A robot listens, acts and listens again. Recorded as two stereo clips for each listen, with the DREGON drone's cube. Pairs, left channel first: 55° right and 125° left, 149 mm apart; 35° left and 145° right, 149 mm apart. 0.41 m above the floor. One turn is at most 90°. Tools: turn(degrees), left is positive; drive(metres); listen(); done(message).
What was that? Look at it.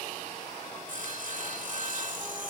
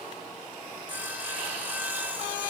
turn(degrees=90)
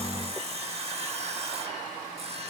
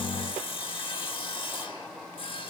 turn(degrees=85)
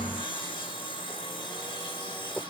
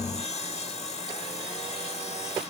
done("Found it: sawing, straight ahead, under 1 m away.")